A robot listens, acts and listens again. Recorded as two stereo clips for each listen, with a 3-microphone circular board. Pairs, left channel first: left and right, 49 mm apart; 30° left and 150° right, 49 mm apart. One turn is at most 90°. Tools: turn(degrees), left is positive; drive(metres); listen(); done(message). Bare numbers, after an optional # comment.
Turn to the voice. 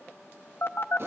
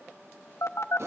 listen()
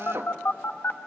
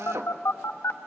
listen()
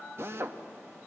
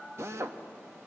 done("I can't make out anyone speaking to turn to.")